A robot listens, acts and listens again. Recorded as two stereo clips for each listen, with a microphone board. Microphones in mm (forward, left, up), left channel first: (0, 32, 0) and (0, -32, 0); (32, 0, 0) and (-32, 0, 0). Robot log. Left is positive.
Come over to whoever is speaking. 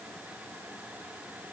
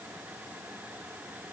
cmd idle
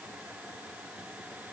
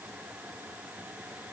cmd idle
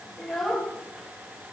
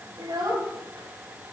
note: The child speaking: straight behind.
cmd yaw +180
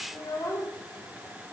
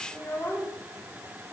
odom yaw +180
note: The child speaking is now 60° left.
cmd yaw +60
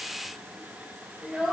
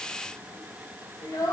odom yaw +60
cmd fwd 1.0
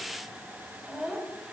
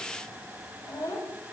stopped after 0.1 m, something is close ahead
end: Blocked. The child speaking is further on, straight ahead.